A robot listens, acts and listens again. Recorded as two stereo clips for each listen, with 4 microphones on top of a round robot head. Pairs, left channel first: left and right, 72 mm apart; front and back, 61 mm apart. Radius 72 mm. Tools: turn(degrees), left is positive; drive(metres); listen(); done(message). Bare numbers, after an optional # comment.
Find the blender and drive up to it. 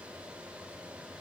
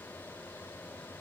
listen()
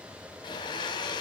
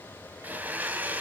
# The blender: 120° left.
turn(120)
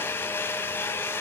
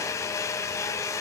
# The blender is now 35° left.
turn(35)
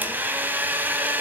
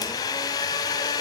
# The blender is now 25° right.
turn(-25)
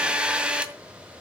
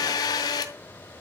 # The blender is now 15° right.
turn(-15)
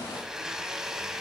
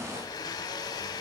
drive(1.0)
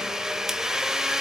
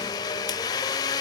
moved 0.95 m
drive(1.0)
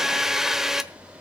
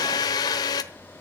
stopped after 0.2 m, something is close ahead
done("I am next to the blender.")